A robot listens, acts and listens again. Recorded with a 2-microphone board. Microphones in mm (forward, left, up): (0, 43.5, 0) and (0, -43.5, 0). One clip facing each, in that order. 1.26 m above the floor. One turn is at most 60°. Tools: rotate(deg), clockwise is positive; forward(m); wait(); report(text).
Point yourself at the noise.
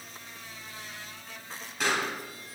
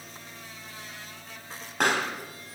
rotate(55)
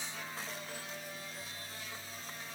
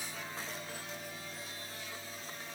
wait()
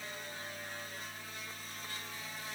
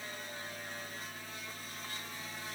report("I heard a pop, but can't make it out now. It was about straight ahead or 70° right.")